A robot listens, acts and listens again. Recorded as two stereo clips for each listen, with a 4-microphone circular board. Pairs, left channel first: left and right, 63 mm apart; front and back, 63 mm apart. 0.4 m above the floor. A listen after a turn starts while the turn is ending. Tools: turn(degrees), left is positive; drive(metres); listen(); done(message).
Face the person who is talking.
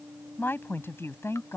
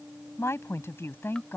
turn(degrees=50)
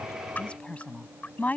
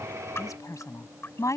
turn(degrees=30)
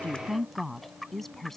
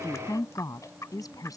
done("Facing the woman speaking.")